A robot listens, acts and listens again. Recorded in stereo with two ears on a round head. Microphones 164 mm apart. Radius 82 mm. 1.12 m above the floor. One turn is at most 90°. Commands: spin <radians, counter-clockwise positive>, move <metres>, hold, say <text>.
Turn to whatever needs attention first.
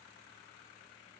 hold
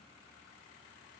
hold
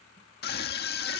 spin 1.05
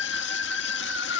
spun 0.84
spin 1.22
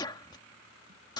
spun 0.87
spin 0.44
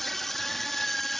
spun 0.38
say Facing the scream.